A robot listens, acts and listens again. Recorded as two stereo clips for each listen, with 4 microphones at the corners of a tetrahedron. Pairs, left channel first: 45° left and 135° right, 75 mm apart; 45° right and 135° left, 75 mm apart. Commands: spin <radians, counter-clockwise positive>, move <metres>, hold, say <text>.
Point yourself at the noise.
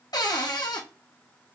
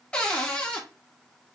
spin 0.52
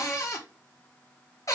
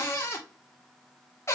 say Facing the cupboard door, under 1 m away.